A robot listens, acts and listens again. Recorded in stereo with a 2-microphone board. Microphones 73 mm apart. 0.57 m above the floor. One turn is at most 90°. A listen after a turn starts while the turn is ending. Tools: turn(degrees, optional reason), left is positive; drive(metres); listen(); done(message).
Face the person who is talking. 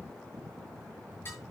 listen()
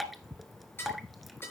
listen()
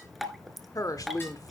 turn(degrees=55, reason="The woman speaking: about 55° left or 125° left.")
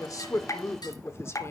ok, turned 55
turn(degrees=50, reason="So it is at 50° left.")
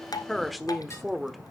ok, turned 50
done("Found it: a woman speaking, straight ahead.")